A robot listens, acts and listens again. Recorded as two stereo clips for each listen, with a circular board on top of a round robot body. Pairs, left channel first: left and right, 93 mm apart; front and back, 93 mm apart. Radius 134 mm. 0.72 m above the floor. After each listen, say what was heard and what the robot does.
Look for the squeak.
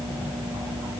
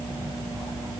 Keep listening.
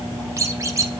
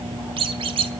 The squeak: 150° right. Turn 150° right.
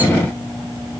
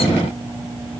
Keep listening.
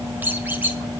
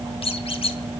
The squeak is now 20° right. Turn 20° right.
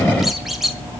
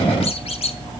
Facing the squeak, 1 to 2 m away.